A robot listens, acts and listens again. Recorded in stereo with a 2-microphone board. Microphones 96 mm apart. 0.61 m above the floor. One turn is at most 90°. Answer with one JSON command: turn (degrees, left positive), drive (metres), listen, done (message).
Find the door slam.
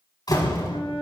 {"turn": 45}
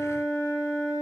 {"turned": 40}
{"listen": true}
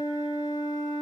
{"done": "I heard a door slam, but can't make it out now. It was about 5° left or 95° left."}